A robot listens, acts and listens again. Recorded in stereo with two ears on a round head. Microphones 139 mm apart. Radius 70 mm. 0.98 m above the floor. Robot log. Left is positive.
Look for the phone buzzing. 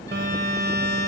cmd yaw -90
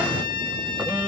end: Found it: a phone buzzing, straight ahead.